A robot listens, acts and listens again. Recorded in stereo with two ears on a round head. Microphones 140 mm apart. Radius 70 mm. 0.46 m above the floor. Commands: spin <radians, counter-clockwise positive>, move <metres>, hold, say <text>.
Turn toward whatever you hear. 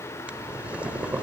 spin -0.52
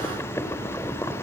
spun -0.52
spin 0.35
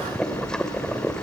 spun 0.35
say Facing the boiling.